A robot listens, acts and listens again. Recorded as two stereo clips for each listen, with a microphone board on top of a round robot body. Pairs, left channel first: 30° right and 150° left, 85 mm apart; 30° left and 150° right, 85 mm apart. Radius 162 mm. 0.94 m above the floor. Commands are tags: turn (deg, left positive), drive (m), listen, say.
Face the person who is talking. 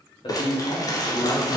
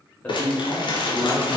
<turn deg="-40"/>
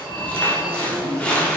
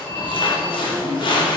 <listen/>
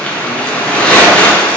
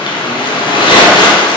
<listen/>
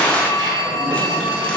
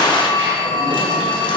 <say>Facing where the man speaking came from. I can't hear it now.</say>